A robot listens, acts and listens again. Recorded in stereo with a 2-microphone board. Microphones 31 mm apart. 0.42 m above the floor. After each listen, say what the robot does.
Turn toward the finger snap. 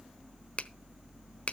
Turn 40° left.
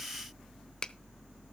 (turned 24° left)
Keep listening.
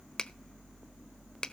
Turn 30° left.
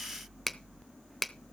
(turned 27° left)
Facing the finger snap.